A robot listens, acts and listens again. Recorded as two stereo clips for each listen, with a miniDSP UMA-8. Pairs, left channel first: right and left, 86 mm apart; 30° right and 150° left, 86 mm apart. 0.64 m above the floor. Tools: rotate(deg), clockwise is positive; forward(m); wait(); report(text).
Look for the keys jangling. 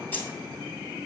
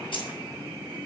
rotate(25)
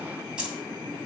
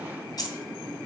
rotate(-10)
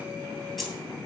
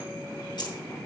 report("Facing the keys jangling.")